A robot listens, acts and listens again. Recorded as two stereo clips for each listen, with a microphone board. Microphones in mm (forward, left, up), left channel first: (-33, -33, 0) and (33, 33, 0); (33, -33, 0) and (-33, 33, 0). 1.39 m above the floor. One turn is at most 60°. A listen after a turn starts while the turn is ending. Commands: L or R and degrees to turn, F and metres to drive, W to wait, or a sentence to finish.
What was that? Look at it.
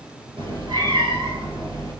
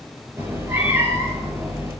L60
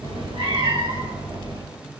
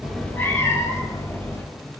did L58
L15
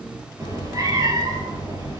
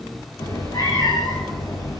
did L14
Found it: a cat meowing, straight ahead.